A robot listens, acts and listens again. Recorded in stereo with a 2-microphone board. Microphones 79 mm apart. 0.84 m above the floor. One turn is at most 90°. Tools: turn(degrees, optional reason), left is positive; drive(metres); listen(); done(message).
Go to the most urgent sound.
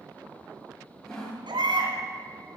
turn(degrees=-90)
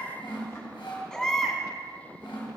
turn(degrees=10, reason="So it is at 10° left.")
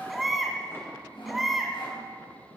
drive(metres=1.0)
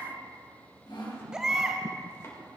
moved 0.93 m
turn(degrees=-10, reason="The baby crying is now 10° right.")
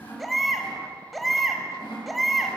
drive(metres=1.0)
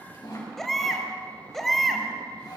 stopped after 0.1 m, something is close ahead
done("Arrived at the baby crying, straight ahead.")